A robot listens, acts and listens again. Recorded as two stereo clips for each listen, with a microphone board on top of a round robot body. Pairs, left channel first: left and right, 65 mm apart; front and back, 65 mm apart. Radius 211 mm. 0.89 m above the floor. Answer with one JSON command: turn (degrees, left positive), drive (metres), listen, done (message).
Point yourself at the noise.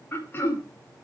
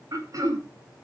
{"turn": 145}
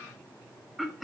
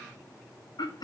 {"done": "Facing the throat clearing."}